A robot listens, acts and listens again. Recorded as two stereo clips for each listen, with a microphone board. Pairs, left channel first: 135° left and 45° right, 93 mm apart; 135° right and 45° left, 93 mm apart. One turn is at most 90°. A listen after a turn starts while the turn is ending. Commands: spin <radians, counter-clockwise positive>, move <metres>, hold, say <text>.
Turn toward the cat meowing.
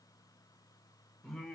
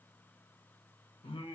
hold
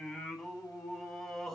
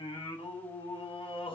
hold
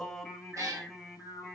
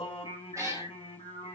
say Found it: a cat meowing, straight ahead.